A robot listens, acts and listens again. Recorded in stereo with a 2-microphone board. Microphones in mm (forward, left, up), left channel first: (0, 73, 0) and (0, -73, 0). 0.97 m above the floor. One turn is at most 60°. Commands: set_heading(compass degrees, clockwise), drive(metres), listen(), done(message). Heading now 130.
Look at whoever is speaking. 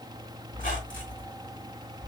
listen()
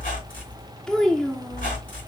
set_heading(100)
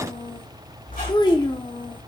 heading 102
set_heading(42)
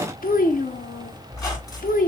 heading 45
set_heading(345)
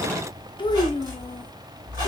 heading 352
set_heading(317)
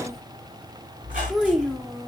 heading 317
done("Found it: a child speaking, straight ahead.")